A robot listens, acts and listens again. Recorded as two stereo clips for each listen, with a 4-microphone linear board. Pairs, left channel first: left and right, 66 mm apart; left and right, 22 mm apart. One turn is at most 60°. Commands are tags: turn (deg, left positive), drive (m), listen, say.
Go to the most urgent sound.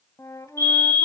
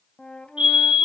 <turn deg="-60"/>
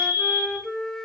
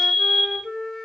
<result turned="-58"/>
<turn deg="-35"/>
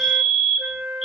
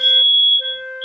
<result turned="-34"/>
<drive m="1.0"/>
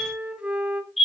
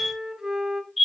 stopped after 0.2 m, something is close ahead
<say>Blocked. The fire alarm is further on, straight ahead.</say>